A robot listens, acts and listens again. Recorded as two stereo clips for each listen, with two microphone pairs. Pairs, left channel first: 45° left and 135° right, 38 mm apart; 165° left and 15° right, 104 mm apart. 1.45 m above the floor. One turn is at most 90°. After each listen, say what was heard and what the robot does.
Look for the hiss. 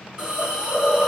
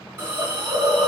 The hiss: 70° right. Turn 70° right.
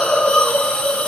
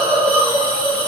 Found it: a hiss, straight ahead, 1 to 2 m away.